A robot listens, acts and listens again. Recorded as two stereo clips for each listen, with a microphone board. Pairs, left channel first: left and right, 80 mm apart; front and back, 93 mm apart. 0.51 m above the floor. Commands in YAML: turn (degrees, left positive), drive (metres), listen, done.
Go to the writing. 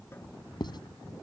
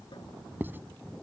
turn: 110
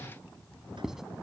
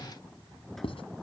drive: 1.0
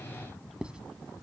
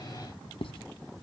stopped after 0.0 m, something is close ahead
turn: -10
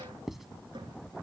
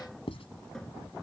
done: "Blocked. The writing is further on, straight ahead."